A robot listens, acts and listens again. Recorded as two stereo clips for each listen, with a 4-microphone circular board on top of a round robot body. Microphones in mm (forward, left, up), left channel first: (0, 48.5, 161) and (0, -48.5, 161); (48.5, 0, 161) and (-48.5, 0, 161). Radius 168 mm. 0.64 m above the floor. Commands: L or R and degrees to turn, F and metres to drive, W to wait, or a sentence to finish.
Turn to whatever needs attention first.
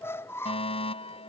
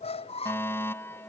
L70
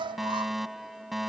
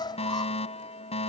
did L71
Found it: a fire alarm, straight ahead.